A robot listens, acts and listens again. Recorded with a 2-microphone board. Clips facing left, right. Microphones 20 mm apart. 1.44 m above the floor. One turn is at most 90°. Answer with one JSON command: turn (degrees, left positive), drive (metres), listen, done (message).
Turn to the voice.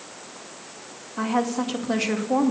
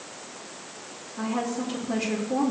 {"turn": 90}
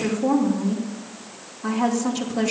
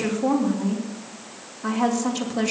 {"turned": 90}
{"turn": -10}
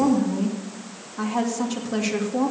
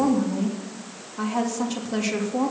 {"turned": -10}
{"done": "Found it: a woman speaking, straight ahead."}